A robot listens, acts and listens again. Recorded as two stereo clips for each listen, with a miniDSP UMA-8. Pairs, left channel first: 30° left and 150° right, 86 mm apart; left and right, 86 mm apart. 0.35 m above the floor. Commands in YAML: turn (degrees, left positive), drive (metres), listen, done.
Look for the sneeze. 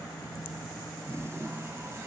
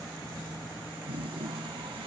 listen: true
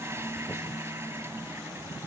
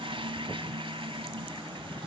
listen: true
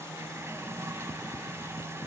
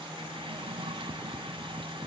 done: "I can't make out a sneeze, only a toilet flushing."